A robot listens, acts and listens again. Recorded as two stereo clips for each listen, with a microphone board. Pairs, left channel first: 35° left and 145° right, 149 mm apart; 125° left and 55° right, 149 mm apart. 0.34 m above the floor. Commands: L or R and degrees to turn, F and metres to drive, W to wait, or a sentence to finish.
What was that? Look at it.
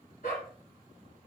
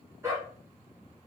L20
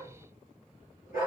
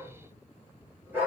L20
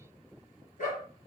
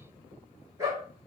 L10
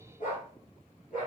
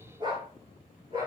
Found it: a dog barking, straight ahead.